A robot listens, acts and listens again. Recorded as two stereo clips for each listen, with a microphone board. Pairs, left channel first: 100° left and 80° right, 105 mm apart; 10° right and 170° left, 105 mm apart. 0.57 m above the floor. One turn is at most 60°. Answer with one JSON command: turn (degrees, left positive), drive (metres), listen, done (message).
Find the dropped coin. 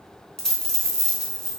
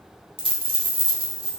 {"turn": -60}
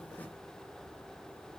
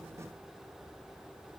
{"turn": -60}
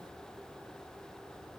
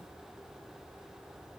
{"turn": -55}
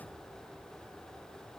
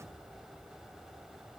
{"done": "Facing where the dropped coin came from. I can't hear it now."}